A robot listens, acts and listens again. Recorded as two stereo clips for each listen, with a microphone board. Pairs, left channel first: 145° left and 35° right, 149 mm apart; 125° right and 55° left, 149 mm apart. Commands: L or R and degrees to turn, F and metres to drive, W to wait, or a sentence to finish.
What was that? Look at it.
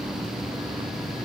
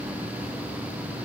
W
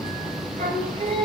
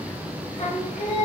R80
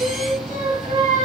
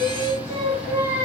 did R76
Found it: singing, straight ahead.